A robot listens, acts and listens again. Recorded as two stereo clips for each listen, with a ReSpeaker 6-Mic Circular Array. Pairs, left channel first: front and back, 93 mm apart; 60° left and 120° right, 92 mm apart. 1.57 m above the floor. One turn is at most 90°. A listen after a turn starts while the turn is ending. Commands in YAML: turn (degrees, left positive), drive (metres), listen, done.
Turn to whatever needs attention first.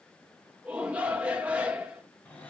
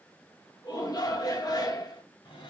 turn: 90
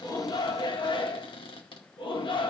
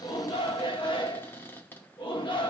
turn: 30
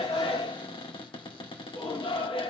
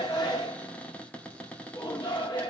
turn: 20
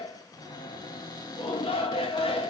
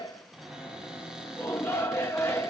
done: "Found it: a shout, straight ahead, 2 to 4 m away."